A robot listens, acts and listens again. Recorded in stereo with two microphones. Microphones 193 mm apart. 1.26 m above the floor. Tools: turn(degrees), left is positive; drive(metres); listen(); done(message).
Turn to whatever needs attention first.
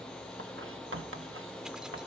listen()
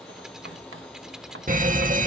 turn(degrees=-40)
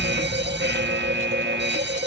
turn(degrees=-90)
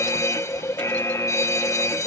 turn(degrees=15)
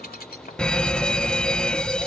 done("Facing the fire alarm.")